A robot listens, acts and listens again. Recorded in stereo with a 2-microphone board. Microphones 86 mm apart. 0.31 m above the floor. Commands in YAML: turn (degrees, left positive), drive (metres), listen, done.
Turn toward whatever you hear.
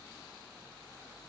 listen: true
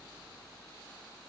listen: true
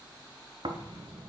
turn: -65
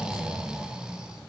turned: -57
turn: -10
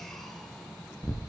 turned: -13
done: "Facing the snoring, under 1 m away."